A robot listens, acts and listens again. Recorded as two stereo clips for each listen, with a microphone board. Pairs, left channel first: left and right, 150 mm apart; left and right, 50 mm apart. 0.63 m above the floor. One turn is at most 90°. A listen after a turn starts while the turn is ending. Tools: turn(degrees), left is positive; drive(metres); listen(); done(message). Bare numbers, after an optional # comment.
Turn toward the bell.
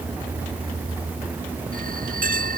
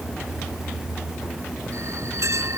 # The bell: about 65° right or 115° right.
turn(-65)
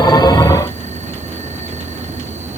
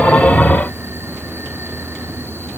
listen()
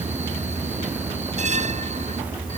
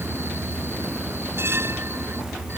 # So it is at 50° right.
turn(-50)
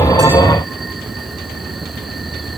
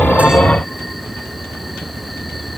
listen()
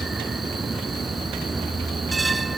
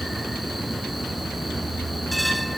done("Facing the bell.")